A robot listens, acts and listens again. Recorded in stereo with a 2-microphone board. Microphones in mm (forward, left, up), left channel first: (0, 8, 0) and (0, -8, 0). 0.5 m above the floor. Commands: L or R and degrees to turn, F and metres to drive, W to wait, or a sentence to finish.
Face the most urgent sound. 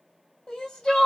L75
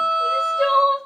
L20
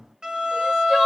W
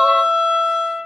W
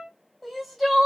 Facing the crying.